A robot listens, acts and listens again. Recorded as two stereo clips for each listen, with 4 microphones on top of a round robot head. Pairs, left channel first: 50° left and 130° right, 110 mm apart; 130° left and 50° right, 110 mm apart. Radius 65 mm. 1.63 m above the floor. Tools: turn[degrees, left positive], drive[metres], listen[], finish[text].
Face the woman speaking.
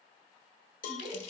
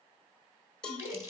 Thought: The woman speaking: 125° right.
Action: turn[-125]
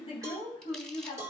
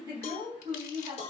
Action: finish[Facing the woman speaking.]